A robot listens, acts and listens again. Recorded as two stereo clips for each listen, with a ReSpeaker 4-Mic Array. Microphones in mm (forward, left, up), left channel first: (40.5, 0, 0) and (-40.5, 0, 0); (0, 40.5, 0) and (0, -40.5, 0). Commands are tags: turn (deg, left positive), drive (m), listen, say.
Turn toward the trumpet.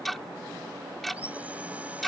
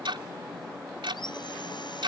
<listen/>
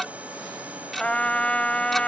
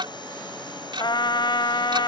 <turn deg="75"/>
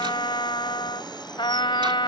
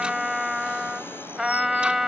<say>Facing the trumpet.</say>